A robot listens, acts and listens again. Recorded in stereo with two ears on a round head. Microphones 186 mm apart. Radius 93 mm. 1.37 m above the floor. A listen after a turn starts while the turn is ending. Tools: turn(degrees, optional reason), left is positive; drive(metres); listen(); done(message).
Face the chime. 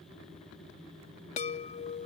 turn(degrees=35, reason="The chime: about 35° left or 145° left.")
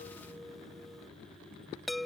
done("Facing the chime.")